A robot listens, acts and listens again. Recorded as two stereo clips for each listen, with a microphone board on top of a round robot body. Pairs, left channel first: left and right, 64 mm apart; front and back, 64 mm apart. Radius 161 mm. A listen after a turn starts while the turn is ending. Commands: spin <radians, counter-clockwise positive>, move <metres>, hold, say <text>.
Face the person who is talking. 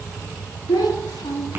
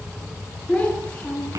spin 1.31
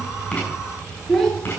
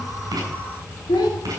say Found it: a child speaking, straight ahead.